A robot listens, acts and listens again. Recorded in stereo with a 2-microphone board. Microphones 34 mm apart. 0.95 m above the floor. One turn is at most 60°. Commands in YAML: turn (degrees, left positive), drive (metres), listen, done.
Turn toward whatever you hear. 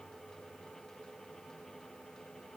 listen: true
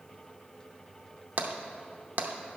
turn: -55
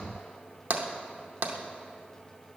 turn: -60
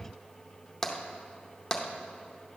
turn: 15
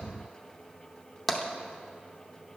done: "Found it: tapping, straight ahead, under 1 m away."